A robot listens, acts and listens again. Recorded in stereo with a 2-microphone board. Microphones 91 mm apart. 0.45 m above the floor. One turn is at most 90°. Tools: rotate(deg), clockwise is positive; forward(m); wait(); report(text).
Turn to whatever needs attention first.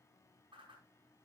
wait()
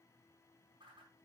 wait()
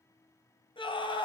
rotate(-65)
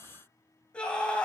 rotate(-10)
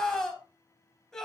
report("Found it: a scream, straight ahead.")